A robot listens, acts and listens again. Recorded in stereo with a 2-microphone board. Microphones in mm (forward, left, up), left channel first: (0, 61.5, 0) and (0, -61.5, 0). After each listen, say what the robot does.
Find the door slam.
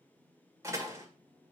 Turn 25° right.
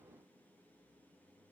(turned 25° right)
Keep listening.
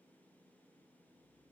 I heard a door slam, but can't make it out now. It was about straight ahead or 130° right.